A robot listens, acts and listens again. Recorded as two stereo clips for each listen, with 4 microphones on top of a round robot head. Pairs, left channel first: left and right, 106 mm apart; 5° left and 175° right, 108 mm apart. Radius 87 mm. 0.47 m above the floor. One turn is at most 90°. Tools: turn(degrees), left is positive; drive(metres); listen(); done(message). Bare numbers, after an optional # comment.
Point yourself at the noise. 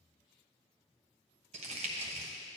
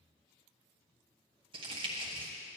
# The crumpling: 125° right.
turn(-90)
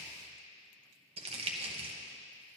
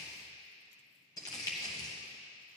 # The crumpling is now 65° right.
turn(-65)
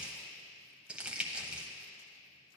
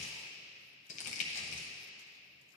# The crumpling is now 10° right.
turn(-10)
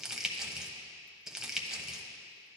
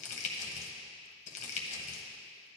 done("Facing the crumpling, 1 to 2 m away.")